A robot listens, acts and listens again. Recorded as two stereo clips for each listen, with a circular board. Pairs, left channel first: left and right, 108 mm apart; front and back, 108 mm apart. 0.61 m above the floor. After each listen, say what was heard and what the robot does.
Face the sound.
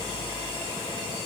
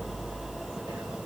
Keep listening.
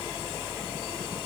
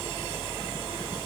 Keep listening.
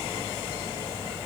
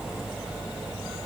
I can't make out anything.